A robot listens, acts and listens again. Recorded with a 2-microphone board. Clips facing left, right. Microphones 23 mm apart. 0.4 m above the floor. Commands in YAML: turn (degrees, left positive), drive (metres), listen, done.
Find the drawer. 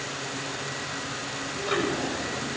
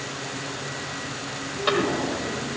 turn: -90
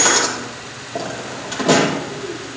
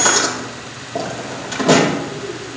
done: "Facing the drawer, over 4 m away."